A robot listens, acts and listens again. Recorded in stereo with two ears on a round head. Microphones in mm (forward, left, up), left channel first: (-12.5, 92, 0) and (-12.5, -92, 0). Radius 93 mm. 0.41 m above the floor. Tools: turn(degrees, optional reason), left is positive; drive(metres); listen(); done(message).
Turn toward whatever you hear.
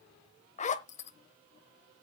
turn(degrees=35, reason="The zipper: about 35° left or 145° left.")
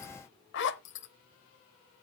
turn(degrees=105, reason="So it is at 105° left.")
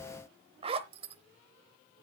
turn(degrees=-30, reason="The zipper is now 30° right.")
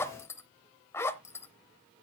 turn(degrees=15, reason="The zipper is now 15° left.")
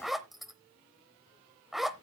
done("Found it: a zipper, straight ahead, under 1 m away.")